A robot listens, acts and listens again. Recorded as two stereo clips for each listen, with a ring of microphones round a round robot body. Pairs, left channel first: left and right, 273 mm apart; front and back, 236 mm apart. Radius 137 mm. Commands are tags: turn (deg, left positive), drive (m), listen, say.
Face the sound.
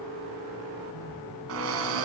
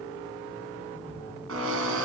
<turn deg="-130"/>
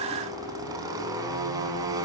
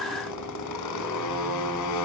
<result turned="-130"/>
<turn deg="-10"/>
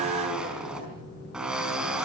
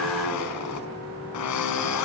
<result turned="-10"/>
<say>Found it: a drill, straight ahead.</say>